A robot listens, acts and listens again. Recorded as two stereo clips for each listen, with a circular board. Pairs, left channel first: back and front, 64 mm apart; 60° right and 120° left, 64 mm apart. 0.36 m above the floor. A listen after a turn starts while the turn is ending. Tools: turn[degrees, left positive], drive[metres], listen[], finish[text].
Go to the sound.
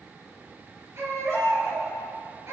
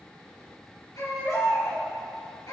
Thought: The baby crying: 40° right.
Action: turn[-40]
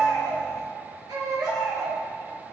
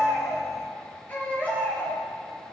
Action: drive[1.0]
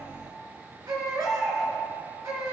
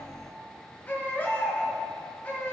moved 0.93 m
Action: drive[1.0]
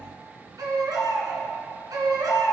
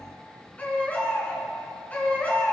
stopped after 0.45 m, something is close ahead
Action: finish[Blocked. The baby crying is further on, straight ahead.]